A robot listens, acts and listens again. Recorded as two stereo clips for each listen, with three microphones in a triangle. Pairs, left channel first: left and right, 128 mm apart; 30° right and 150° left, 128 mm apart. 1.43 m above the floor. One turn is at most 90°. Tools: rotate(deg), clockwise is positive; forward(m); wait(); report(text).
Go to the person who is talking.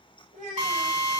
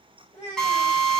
rotate(70)
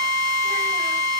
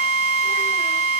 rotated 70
wait()
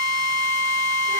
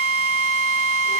wait()
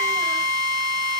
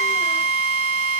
report("I heard a child speaking from this way, but can't make it out now. I did not reach it.")